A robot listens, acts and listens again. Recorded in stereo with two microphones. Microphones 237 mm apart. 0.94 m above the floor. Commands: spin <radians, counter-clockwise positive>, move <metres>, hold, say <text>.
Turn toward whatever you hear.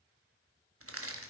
spin -1.13
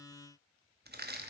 spin -0.79
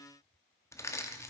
spin 0.17
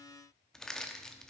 say Facing the crushing.